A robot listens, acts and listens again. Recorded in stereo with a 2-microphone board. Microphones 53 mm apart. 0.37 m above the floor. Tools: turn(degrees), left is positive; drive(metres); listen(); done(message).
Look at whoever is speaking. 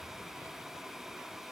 listen()
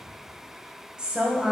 turn(degrees=-15)
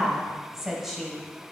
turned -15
done("Found it: a woman speaking, straight ahead.")